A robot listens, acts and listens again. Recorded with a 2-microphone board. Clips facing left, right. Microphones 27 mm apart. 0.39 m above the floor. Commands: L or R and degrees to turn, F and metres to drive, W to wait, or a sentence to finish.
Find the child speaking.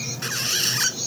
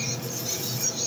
W
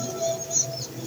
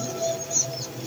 W
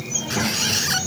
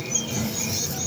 L40
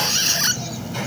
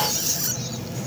L95
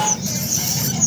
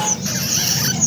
Facing the child speaking.